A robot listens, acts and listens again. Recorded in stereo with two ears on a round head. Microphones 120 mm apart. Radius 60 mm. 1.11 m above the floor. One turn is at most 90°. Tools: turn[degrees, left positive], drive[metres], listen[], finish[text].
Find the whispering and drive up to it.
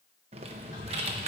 Thought: The whispering: about 60° left or 120° left.
Action: turn[60]
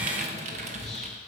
Action: drive[1.0]
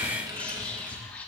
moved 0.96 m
Thought: The whispering is now 10° left.
Action: turn[10]
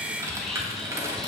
Action: listen[]
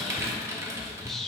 Action: drive[1.0]
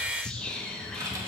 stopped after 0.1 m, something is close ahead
Action: finish[I am next to the whispering.]